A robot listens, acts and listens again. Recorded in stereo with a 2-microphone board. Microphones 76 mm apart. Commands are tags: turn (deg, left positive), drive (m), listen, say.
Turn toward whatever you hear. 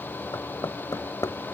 <turn deg="55"/>
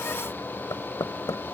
<turn deg="65"/>
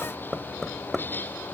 <say>Facing the knocking.</say>